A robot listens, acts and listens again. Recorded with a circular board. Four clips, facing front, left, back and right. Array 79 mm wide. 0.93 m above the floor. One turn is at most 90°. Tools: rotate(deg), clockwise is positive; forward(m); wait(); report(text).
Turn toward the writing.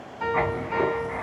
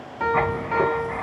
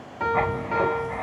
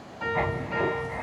rotate(-85)
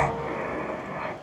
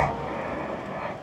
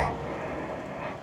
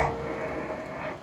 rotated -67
rotate(-15)
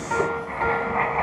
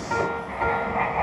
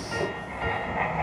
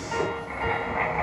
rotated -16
report("Facing the writing, 2 to 4 m away.")